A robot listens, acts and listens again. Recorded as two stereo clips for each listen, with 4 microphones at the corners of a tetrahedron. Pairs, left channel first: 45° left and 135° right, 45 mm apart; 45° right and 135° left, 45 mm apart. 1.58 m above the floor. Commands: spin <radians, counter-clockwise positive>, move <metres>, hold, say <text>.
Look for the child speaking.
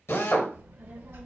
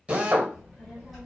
spin -2.36
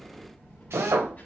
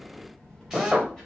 spin 0.61
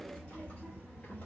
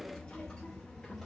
spin 0.35
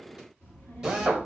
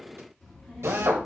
spin 0.61
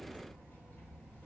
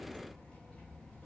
spin 0.35
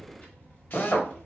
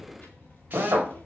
say Facing the child speaking, 1 to 2 m away.